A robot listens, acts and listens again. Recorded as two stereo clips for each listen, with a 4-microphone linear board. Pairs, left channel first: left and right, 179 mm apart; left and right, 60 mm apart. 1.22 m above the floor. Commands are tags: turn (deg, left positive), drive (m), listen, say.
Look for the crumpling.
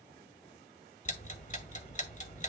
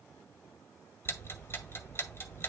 <listen/>
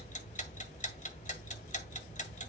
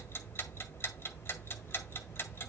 <listen/>
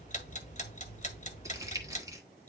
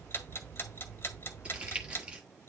<turn deg="-20"/>
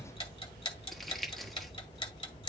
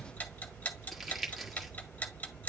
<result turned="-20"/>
<say>Facing the crumpling.</say>